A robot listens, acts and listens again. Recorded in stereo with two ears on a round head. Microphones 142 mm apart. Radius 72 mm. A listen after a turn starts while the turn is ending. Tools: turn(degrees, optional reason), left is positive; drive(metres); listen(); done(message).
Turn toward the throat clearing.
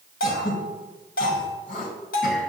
turn(degrees=60, reason="The throat clearing: about 60° left or 120° left.")
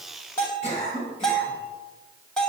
turn(degrees=50, reason="So it is at 50° left.")
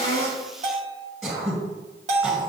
done("Facing the throat clearing, 2 to 4 m away.")